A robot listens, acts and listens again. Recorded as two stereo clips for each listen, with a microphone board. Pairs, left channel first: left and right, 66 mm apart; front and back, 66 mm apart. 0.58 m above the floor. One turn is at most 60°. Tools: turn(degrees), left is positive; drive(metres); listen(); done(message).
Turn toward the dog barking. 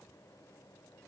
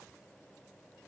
listen()
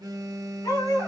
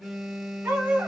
turn(degrees=60)
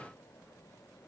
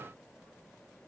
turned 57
turn(degrees=60)
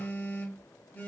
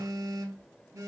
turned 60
listen()
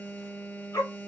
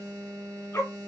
turn(degrees=50)
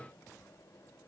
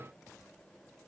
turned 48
listen()
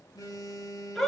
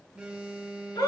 done("Found it: a dog barking, straight ahead, 2 to 4 m away.")